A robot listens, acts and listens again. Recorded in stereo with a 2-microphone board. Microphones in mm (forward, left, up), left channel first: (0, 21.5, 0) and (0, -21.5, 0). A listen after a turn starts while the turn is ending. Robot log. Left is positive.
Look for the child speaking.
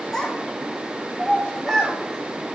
cmd yaw +30
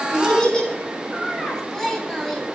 cmd yaw +30
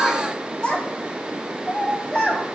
note: So it is at 165° left.
cmd yaw +165
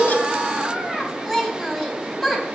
end: Found it: a child speaking, straight ahead, 2 to 4 m away.